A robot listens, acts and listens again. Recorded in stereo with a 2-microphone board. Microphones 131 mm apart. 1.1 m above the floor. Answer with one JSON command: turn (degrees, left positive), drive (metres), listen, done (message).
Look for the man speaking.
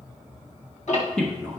{"turn": 30}
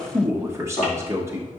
{"turn": -20}
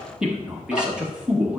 {"turn": -10}
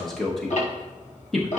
{"done": "Facing the man speaking, under 1 m away."}